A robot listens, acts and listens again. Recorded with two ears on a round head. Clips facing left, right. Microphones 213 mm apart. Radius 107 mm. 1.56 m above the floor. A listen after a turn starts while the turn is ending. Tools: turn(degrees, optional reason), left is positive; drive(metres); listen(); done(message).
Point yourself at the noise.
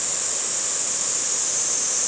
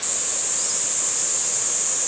listen()
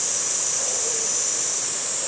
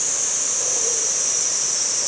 listen()
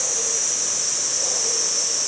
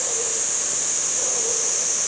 done("I can't make out anything to turn to.")